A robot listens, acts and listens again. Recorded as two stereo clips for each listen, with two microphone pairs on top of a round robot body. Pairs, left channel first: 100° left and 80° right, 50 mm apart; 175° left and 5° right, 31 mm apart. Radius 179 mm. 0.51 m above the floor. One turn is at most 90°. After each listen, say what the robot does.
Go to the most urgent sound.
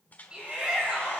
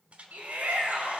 Drive 1.0 m forward.
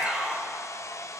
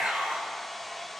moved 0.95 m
Turn 15° right.
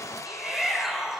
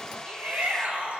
Drive 1.0 m forward.
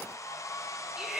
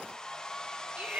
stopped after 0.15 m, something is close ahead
Something is in my way. I am facing the shout but have not reached it.